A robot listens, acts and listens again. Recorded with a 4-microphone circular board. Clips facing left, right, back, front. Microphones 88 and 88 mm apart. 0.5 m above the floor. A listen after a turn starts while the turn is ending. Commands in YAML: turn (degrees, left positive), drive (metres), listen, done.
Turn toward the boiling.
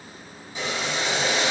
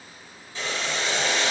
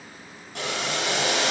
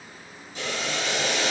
turn: 165
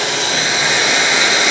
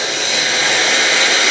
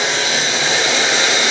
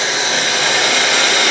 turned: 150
turn: 15
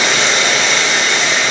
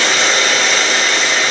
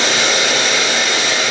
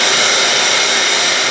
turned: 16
done: "Facing the boiling, 2 to 4 m away."